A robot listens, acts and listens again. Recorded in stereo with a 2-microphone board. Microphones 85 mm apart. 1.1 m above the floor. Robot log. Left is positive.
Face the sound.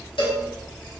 cmd yaw +90
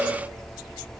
end: Facing the cowbell, 1 to 2 m away.